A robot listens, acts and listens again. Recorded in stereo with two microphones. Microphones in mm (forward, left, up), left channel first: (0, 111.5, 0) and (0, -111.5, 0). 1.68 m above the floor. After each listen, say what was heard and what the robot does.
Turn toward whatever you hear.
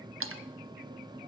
Turn 90° right.
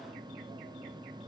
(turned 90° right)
Facing where the splash came from. I can't hear it now.